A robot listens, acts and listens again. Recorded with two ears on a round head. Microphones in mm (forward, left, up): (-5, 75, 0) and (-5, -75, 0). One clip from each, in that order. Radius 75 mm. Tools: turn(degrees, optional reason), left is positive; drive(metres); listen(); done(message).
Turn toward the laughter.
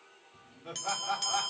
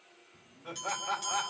turn(degrees=-30)
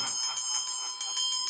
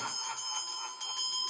listen()
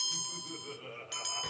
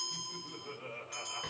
turn(degrees=25, reason="So it is at 25° left.")
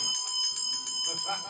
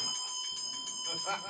done("Found it: laughter, straight ahead.")